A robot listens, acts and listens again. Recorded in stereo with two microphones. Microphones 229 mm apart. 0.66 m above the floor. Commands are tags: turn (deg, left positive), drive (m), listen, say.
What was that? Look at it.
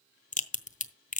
<turn deg="35"/>
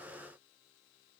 <listen/>
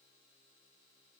<say>I heard a crack, but can't make it out now. It was about straight ahead or 110° left.</say>